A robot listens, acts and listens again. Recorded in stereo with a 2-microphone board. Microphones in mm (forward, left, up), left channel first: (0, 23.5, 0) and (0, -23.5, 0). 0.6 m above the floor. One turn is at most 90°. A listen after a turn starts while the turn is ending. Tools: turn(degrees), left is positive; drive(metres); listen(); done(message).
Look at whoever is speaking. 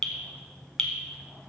listen()
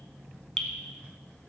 listen()
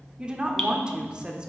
turn(degrees=-20)
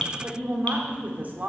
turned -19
turn(degrees=-90)
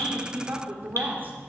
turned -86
turn(degrees=-50)
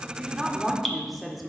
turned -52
done("Facing the woman speaking, 1 to 2 m away.")